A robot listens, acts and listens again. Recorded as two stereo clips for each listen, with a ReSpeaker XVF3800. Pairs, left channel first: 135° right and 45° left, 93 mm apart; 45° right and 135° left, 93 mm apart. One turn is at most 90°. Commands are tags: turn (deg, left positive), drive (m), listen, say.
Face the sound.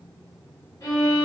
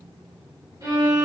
<turn deg="90"/>
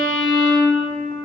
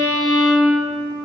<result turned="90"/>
<turn deg="90"/>
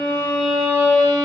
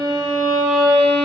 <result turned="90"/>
<turn deg="50"/>
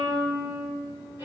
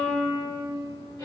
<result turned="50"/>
<turn deg="-10"/>
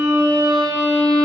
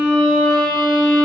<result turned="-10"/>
<say>Found it: a violin, straight ahead.</say>